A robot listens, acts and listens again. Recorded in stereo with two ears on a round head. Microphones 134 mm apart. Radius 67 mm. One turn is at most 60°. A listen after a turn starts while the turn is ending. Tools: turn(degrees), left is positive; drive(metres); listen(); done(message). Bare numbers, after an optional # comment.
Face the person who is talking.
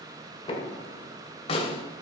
listen()
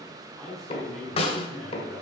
turn(30)
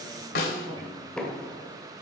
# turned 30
# So it is at 30° right.
turn(-30)
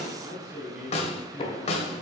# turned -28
done("Facing the man speaking, over 4 m away.")